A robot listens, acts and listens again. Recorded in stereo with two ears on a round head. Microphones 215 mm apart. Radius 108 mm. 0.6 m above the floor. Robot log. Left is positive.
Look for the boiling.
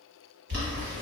note: The boiling: about 50° right or 130° right.
cmd yaw -50
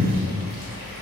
note: So it is at 85° right.
cmd yaw -85
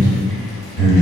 cmd idle
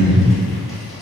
cmd idle
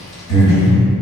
end: Found it: boiling, straight ahead.